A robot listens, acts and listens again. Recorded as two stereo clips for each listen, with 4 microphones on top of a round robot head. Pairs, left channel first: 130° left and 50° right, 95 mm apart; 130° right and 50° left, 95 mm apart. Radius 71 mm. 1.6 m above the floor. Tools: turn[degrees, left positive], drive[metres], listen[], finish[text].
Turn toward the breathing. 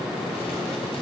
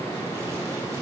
Action: listen[]
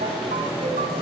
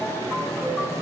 Action: listen[]
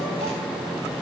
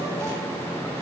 Action: finish[I can't make out breathing to turn to.]